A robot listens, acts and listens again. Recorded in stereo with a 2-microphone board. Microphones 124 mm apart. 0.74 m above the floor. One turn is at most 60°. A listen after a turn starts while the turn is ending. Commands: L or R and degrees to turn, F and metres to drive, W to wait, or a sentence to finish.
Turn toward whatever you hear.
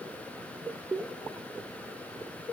W
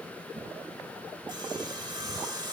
R35
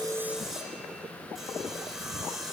Found it: sawing, straight ahead, 2 to 4 m away.